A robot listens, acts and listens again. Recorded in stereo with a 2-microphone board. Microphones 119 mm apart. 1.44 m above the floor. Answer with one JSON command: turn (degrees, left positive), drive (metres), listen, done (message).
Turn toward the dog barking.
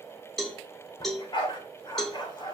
{"turn": 40}
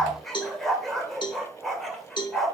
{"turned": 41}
{"done": "Facing the dog barking, 2 to 4 m away."}